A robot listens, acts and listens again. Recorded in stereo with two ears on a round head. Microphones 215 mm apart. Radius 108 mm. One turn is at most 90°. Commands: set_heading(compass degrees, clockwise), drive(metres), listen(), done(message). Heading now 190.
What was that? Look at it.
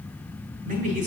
set_heading(225)
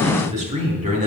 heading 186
set_heading(216)
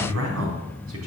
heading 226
set_heading(316)
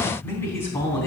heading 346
set_heading(336)
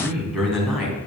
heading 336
done("Found it: a man speaking, straight ahead, 2 to 4 m away.")